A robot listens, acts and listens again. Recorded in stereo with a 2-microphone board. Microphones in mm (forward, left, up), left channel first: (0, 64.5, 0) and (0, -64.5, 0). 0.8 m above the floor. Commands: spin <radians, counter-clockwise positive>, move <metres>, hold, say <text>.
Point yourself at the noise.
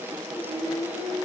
spin 0.52
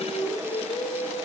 spin 2.01
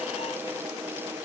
hold
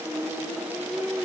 say Found it: singing, straight ahead, over 4 m away.